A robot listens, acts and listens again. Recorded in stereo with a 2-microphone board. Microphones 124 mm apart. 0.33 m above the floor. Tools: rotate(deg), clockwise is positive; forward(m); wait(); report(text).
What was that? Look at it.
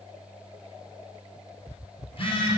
rotate(-45)
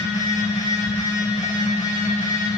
rotate(-85)
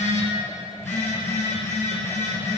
rotate(-20)
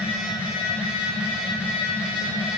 rotate(10)
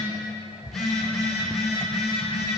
report("Found it: a phone buzzing, straight ahead.")